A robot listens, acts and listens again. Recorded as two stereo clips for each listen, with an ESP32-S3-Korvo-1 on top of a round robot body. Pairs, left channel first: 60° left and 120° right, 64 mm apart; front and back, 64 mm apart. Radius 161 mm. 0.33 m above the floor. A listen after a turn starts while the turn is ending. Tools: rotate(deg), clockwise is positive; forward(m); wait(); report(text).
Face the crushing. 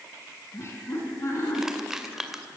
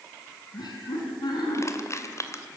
rotate(40)
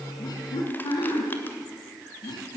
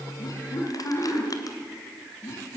wait()
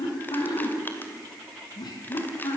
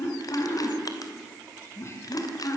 wait()
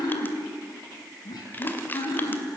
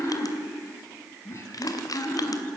report("Facing the crushing, 2 to 4 m away.")